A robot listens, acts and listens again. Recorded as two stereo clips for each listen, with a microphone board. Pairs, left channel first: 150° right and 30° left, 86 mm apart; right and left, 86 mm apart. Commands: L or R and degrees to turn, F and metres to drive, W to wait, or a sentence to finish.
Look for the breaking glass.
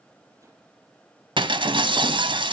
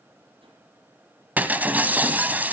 L20
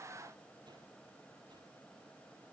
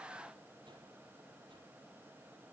I heard breaking glass from this way, but can't make it out now.